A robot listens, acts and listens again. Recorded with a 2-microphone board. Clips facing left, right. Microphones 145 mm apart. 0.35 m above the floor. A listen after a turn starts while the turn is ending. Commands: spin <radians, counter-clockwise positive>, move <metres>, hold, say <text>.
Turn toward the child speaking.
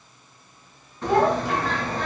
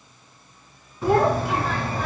spin -0.96
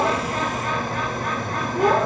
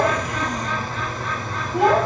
spin -1.40
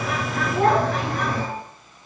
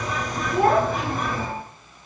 spin -0.35
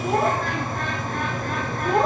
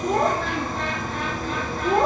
say Found it: a child speaking, straight ahead, over 4 m away.